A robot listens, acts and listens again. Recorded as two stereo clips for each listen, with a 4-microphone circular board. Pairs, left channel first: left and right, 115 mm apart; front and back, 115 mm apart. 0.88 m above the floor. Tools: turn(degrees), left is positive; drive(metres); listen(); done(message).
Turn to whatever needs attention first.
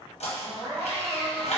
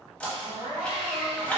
turn(degrees=-140)
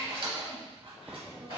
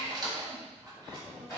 listen()
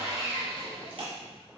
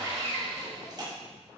listen()
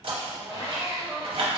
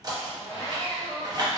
turn(degrees=15)
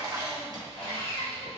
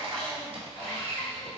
listen()
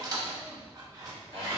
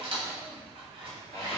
listen()
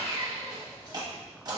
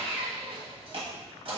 done("I heard crying from this way, but can't make it out now.")